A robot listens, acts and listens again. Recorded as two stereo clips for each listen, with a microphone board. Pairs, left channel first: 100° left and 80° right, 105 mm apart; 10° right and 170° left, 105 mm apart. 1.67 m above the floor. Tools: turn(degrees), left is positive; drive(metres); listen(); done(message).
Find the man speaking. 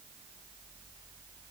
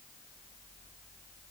listen()
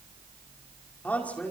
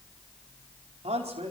turn(degrees=180)
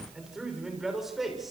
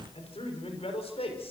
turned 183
turn(degrees=10)
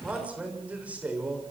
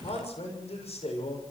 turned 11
done("Found it: a man speaking, straight ahead, over 4 m away.")